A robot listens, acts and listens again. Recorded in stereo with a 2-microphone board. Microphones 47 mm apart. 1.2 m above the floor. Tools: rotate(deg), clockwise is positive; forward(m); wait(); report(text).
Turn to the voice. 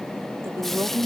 rotate(90)
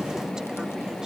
wait()
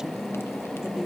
rotate(15)
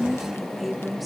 report("Facing the woman speaking.")